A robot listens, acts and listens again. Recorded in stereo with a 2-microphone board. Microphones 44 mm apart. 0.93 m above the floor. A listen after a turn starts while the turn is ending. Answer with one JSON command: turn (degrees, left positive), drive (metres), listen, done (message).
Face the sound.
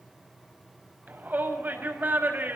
{"turn": -45}
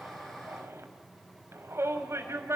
{"turn": -90}
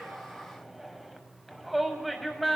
{"done": "Facing the shout."}